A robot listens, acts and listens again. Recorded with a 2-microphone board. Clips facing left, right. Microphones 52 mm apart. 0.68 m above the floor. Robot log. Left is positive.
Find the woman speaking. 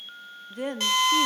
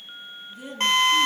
note: The woman speaking: about 60° left or 120° left.
cmd yaw +60
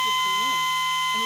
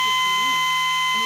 cmd idle
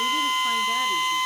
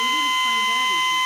cmd idle
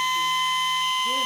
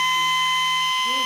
end: I heard a woman speaking, but can't make it out now. It was about straight ahead or 60° left.